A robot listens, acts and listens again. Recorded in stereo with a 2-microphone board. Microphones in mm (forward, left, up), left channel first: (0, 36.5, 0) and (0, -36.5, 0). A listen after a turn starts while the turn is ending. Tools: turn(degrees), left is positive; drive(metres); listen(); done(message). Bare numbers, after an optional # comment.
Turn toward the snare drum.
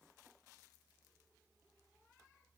listen()
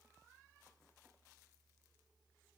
listen()
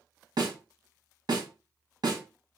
# The snare drum: about 70° right or 110° right.
turn(-70)
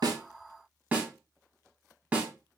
# So it is at 20° right.
turn(-20)
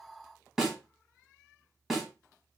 done("Found it: a snare drum, straight ahead.")